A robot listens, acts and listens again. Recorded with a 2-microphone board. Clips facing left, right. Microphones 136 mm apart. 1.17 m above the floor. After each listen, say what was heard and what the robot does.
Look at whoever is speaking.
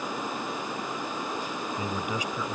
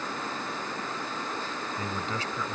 Turn 30° left.
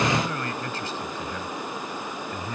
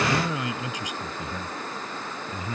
So it is at 10° right. Turn 10° right.
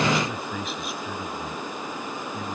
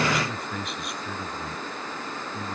Found it: a man speaking, straight ahead.